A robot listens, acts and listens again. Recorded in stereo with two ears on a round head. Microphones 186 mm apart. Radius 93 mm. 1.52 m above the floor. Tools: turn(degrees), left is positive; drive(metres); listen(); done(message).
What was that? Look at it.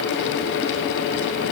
listen()
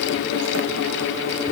listen()
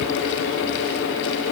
done("I can't make out anything to turn to.")